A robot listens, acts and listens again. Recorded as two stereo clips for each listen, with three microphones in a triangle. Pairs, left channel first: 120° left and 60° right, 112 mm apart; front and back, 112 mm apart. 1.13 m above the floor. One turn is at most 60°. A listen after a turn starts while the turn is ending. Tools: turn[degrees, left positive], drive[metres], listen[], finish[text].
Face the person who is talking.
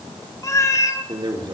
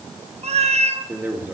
Thought: The man speaking: 105° right.
Action: turn[-60]
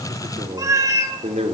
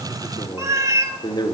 Thought: The man speaking is now 45° right.
Action: turn[-45]
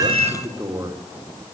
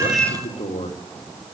Action: finish[Facing the man speaking, 2 to 4 m away.]